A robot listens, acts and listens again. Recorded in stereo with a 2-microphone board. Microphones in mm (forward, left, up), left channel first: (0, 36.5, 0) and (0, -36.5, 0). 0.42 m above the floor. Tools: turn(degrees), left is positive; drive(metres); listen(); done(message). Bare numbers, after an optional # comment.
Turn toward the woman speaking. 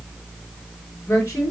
# The woman speaking: about 30° left or 150° left.
turn(30)
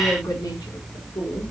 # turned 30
# So it is at 115° left.
turn(115)
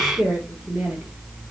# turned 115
done("Found it: a woman speaking, straight ahead.")